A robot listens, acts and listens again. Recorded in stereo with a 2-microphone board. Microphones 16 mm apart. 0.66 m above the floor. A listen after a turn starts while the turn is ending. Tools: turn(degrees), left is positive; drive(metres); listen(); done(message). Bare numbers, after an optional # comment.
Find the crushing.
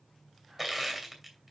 # The crushing: about 20° right or 160° right.
turn(-20)
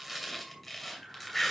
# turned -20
done("Found it: crushing, straight ahead, 2 to 4 m away.")